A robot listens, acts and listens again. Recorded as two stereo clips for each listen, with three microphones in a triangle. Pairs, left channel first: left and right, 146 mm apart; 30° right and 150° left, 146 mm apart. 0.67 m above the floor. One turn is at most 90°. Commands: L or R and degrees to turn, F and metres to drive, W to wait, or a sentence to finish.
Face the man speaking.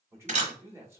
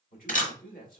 R15
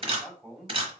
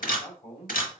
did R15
Found it: a man speaking, straight ahead.